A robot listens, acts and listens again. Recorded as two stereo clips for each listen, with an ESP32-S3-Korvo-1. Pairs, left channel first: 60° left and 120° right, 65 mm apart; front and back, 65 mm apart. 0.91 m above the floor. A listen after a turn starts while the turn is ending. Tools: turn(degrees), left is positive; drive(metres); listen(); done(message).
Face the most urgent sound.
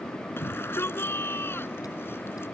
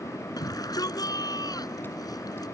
turn(degrees=10)
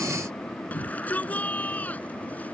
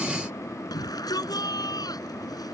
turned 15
done("Facing the shout.")